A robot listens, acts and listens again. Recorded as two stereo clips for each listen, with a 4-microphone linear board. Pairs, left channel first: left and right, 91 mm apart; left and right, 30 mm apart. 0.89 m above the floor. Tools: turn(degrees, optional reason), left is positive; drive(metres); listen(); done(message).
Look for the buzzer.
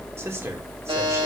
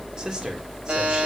turn(degrees=-75, reason="The buzzer: about 75° right or 105° right.")
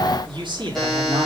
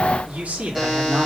done("Facing the buzzer, over 4 m away.")